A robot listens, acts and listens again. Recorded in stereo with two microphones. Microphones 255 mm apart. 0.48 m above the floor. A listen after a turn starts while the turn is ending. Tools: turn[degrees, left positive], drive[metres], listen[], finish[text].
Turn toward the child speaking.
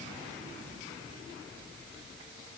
Action: listen[]
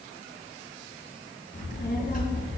Thought: The child speaking: about 35° left or 145° left.
Action: turn[35]
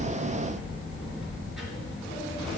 Action: finish[Found it: a child speaking, straight ahead.]